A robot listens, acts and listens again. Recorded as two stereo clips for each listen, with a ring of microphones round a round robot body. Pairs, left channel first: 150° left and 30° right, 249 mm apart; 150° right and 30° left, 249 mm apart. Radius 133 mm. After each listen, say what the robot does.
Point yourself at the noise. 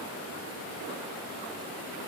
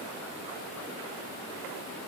Keep listening.
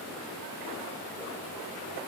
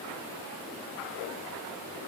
Keep listening.
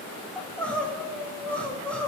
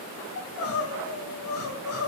Turn 125° right.
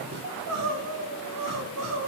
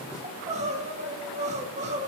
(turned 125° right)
Turn 30° right.
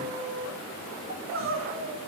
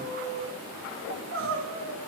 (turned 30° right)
Found it: crying, straight ahead.